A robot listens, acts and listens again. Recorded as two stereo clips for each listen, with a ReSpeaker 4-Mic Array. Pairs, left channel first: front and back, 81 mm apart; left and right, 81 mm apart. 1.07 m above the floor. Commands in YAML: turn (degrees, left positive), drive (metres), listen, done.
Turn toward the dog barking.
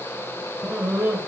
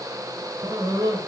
turn: -110
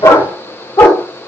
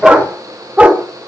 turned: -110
turn: -25
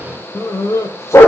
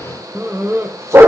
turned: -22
turn: -50
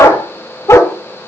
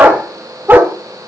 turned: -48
turn: -30
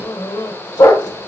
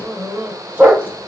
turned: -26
turn: -20
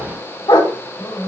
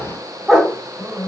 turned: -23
done: "Facing the dog barking."